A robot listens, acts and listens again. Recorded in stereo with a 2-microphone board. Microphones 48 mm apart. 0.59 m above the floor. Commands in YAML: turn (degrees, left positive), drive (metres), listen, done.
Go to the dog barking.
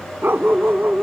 turn: -50
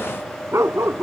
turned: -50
turn: -80
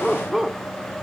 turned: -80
drive: 1.0
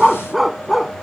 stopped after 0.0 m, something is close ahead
done: "Something is in my way. I am facing the dog barking but have not reached it."